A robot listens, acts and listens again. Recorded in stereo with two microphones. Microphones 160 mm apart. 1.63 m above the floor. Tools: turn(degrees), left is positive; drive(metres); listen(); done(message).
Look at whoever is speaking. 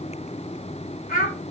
turn(degrees=70)
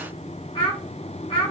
turn(degrees=35)
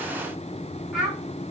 done("Found it: a child speaking, straight ahead.")